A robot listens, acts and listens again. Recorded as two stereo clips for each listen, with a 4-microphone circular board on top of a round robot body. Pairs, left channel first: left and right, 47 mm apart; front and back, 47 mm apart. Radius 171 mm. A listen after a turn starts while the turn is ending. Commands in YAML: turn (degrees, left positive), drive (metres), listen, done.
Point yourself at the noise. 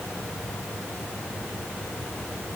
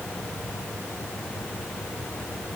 listen: true
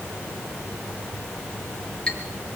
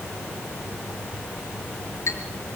turn: 20
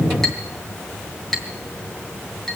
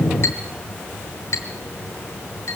done: "Found it: a clink, straight ahead."